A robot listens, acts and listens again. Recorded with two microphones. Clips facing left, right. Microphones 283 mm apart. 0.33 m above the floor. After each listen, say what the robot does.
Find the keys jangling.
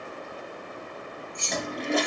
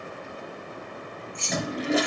Turn 50° left.
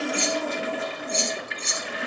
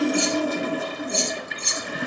Turn 15° right.
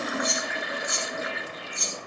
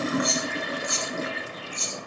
Turn 10° right.
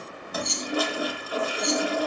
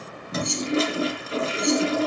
Facing the keys jangling, over 4 m away.